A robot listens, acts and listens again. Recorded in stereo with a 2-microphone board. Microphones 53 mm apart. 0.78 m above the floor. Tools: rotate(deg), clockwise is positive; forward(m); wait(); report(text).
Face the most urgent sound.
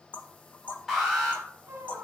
rotate(30)
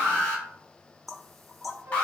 rotate(-25)
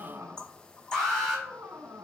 report("Facing the alarm.")